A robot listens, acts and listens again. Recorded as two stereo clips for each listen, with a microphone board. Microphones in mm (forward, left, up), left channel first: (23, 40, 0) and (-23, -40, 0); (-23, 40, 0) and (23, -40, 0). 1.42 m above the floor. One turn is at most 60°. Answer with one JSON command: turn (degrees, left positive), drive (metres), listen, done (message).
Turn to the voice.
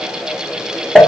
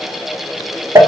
{"listen": true}
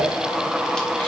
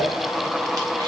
{"listen": true}
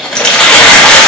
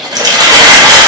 {"done": "I can't make out anyone speaking, only crumpling."}